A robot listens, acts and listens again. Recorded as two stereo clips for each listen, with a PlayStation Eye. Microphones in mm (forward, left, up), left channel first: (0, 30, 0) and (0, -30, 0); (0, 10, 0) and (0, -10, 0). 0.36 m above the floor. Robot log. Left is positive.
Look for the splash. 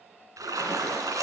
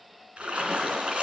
note: The splash: about 75° right or 105° right.
cmd yaw -75
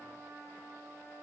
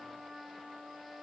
cmd idle
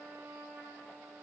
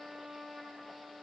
end: I heard a splash, but can't make it out now. It was about straight ahead or 30° right.